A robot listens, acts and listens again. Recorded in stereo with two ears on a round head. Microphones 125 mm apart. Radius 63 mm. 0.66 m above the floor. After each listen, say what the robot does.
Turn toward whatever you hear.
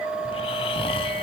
Turn 40° left.
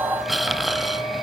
Found it: snoring, straight ahead, 1 to 2 m away.